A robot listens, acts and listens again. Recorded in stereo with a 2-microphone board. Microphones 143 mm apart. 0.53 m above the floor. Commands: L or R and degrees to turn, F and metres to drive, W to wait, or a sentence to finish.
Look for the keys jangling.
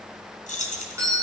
L65
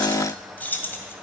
L15
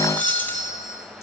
W
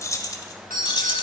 L35
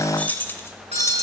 L15
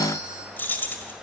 L15
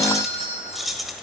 Facing the keys jangling.